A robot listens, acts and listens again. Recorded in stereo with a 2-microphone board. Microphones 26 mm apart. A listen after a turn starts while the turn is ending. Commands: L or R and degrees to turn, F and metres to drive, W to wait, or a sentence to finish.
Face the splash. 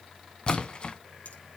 L40
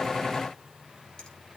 W
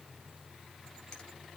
I heard a splash, but can't make it out now. It was about straight ahead or 100° left.